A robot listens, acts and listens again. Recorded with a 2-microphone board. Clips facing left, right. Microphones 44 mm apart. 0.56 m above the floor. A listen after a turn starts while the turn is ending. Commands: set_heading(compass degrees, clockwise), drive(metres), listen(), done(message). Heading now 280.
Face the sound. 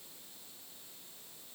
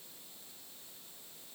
listen()
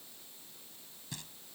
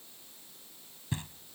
set_heading(305)
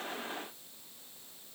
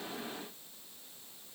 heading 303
listen()
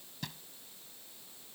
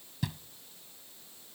done("Facing the knocking.")